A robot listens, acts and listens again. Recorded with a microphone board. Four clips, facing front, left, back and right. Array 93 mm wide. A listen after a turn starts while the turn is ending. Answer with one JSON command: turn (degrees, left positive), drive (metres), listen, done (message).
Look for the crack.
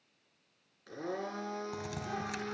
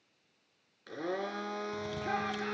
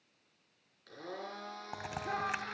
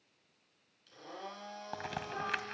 {"turn": -120}
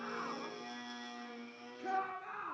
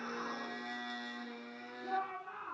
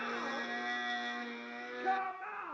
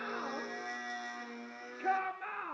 {"done": "Facing where the crack came from. I can't hear it now."}